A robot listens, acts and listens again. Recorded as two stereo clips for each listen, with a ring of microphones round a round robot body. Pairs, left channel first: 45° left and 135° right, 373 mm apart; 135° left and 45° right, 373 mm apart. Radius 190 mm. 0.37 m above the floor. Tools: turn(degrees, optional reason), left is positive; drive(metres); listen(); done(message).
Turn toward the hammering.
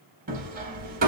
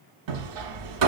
turn(degrees=-65, reason="The hammering: 65° right.")
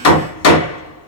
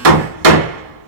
done("Facing the hammering.")